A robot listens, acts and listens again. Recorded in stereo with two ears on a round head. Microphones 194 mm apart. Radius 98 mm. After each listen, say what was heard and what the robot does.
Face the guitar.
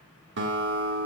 The guitar: about 60° right or 120° right. Turn 60° right.
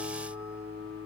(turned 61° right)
So it is at 50° right. Turn 50° right.
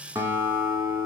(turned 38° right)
The guitar is now 10° right. Turn 10° right.
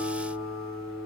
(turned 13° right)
Facing the guitar, 1 to 2 m away.